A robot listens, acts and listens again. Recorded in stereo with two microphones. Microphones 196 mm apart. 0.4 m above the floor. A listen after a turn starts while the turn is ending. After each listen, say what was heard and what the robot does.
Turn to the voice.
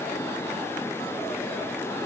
Keep listening.
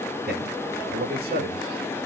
The man speaking: about 55° right or 125° right. Turn 55° right.
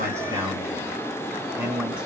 Found it: a man speaking, straight ahead.